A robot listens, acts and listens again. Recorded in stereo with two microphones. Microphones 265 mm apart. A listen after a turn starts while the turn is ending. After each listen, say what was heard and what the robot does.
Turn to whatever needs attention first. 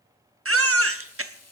The baby crying: about 55° right or 125° right. Turn 55° right.
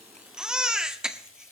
Found it: a baby crying, straight ahead, under 1 m away.